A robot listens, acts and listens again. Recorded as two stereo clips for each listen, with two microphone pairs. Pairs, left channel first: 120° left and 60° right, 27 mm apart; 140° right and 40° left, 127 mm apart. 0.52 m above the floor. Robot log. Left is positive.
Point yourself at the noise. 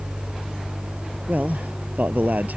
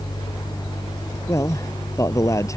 note: The man speaking: 75° right.
cmd yaw -75
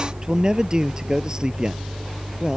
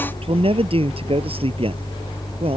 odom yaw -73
end: Facing the man speaking.